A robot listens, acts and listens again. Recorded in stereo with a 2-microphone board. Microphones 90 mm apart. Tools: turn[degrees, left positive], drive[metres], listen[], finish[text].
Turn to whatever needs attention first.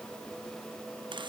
Action: listen[]
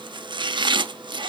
Action: listen[]
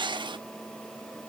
Action: finish[I can't make out anything urgent to turn to.]